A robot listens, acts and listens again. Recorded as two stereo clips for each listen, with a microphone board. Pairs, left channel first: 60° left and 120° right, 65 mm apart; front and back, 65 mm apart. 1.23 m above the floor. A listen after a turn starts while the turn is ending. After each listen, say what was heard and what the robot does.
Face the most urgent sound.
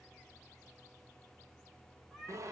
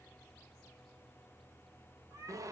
Keep listening.
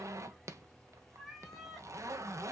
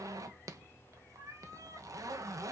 Keep listening.
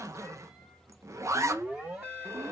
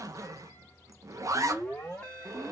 The alarm: 75° right. Turn 75° right.
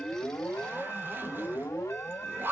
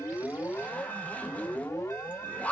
The alarm is now 10° left. Turn 10° left.
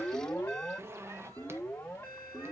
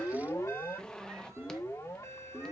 Facing the alarm.